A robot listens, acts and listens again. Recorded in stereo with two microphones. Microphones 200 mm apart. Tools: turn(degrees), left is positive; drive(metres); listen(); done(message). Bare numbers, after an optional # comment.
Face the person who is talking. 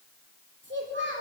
# The child speaking: about 60° right or 120° right.
turn(-60)
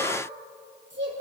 # So it is at 65° right.
turn(-65)
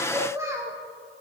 # The child speaking is now 15° right.
turn(-15)
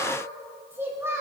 # The child speaking is now 15° right.
turn(-15)
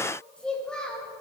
done("Facing the child speaking.")